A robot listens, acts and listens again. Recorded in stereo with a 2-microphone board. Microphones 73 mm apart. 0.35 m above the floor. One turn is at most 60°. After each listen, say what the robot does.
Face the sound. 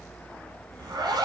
Turn 60° right.
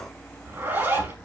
Turn 30° right.
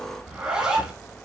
Turn 10° right.
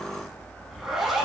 Facing the zipper.